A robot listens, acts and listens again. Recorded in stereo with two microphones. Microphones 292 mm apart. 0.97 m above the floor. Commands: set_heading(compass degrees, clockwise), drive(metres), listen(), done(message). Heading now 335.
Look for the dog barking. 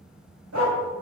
set_heading(45)
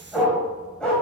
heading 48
done("Found it: a dog barking, straight ahead.")